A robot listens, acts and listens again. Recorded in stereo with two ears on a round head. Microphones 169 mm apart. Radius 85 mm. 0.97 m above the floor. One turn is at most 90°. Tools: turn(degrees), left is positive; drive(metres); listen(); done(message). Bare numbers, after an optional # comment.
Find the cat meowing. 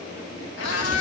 turn(90)
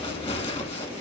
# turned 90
listen()
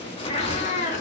# The cat meowing is now 40° left.
turn(40)
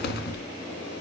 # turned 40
listen()
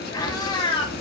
# The cat meowing is now 30° left.
turn(30)
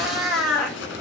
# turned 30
done("Found it: a cat meowing, straight ahead.")